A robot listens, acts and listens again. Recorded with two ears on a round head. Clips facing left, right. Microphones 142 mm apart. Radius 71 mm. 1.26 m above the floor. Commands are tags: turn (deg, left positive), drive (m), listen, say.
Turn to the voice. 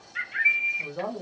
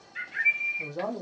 <turn deg="-30"/>
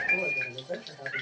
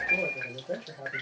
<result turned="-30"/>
<turn deg="-145"/>
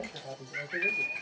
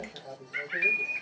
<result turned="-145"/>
<turn deg="15"/>
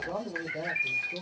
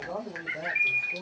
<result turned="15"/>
<say>Facing the man speaking, 1 to 2 m away.</say>